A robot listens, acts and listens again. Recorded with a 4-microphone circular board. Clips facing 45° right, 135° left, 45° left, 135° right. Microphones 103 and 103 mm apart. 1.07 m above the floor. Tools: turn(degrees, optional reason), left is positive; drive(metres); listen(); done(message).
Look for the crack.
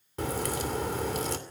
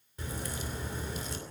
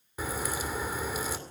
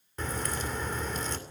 turn(degrees=-35, reason="The crack: 35° right.")
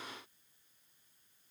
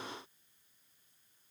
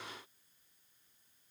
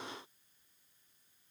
done("I heard a crack from this way, but can't make it out now.")